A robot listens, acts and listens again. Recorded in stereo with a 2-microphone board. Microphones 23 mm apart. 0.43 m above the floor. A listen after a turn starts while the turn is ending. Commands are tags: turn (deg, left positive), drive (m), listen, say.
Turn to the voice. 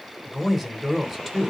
<turn deg="30"/>
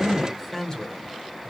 <turn deg="150"/>
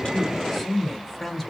<say>Found it: a man speaking, straight ahead, 1 to 2 m away.</say>